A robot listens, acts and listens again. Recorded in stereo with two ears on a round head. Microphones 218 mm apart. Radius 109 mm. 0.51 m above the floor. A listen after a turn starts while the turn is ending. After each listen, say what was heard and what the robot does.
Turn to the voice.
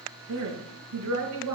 The woman speaking: about 70° right or 110° right. Turn 70° right.
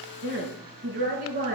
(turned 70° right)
So it is at 35° right. Turn 35° right.
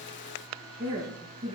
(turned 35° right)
The woman speaking is now 15° right. Turn 15° right.
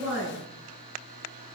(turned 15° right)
Facing the woman speaking.